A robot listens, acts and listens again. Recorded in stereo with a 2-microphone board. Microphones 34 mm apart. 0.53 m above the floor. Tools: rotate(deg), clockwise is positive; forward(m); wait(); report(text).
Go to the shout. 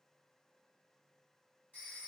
wait()
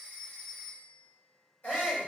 rotate(-60)
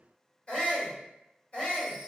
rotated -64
rotate(-35)
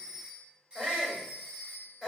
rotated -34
forward(1.0)
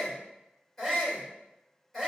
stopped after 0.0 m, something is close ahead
report("Something is in my way. I am facing the shout but have not reached it.")